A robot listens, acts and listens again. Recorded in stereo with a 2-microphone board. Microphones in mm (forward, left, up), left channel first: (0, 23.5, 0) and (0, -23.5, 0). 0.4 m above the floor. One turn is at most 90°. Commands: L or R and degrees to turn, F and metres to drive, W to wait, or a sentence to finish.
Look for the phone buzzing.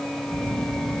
R60
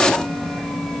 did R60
R10
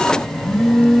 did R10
Found it: a phone buzzing, straight ahead, under 1 m away.